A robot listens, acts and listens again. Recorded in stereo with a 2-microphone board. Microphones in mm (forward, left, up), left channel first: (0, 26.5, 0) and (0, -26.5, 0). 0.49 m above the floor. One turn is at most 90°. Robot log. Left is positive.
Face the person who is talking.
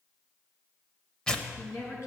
note: The woman speaking: about 60° left or 120° left.
cmd yaw +60
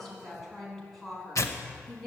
end: Found it: a woman speaking, straight ahead.